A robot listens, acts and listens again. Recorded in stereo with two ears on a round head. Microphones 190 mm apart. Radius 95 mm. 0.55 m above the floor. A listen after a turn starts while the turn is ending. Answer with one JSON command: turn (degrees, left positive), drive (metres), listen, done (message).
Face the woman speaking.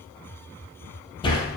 {"listen": true}
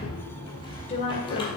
{"turn": 30}
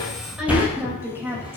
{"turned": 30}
{"turn": -10}
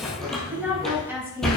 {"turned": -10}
{"turn": -10}
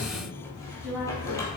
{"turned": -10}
{"done": "Facing the woman speaking, over 4 m away."}